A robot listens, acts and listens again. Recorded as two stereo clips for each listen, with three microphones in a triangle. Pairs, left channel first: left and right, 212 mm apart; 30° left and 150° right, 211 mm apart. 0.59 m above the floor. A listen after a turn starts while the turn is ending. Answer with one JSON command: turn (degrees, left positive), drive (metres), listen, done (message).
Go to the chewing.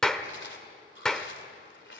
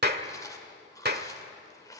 {"turn": 100}
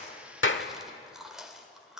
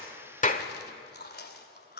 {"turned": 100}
{"drive": 1.0}
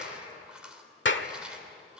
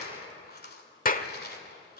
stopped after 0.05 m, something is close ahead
{"done": "Blocked. The chewing is further on, straight ahead."}